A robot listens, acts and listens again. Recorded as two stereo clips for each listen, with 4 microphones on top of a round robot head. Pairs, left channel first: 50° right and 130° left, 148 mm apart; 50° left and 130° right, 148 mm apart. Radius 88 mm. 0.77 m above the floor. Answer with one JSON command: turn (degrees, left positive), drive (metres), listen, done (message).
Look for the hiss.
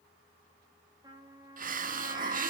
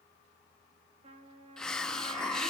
{"turn": 135}
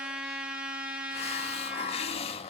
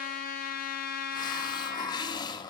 {"turn": -10}
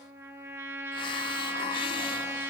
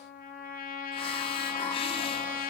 {"listen": true}
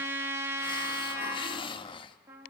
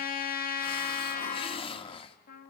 {"done": "Found it: a hiss, straight ahead."}